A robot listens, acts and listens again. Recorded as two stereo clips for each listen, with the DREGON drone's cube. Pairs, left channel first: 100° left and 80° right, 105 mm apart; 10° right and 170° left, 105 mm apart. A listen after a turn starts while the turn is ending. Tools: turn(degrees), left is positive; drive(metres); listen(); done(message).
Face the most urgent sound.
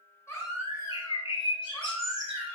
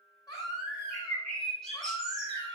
turn(degrees=40)
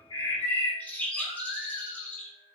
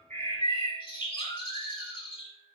turn(degrees=-10)
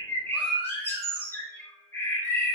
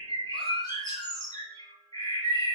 done("Found it: a baby crying, straight ahead.")